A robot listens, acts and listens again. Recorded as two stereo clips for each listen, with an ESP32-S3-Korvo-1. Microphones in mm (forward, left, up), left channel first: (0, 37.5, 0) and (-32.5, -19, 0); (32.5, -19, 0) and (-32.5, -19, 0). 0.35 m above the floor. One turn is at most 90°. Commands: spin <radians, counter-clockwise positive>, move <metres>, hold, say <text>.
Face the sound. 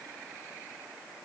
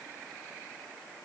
hold
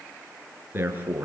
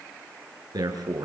spin 1.57
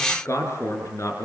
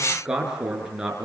spin 1.57
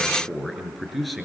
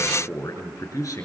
spin -0.52
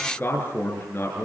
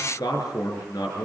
say Found it: a man speaking, straight ahead.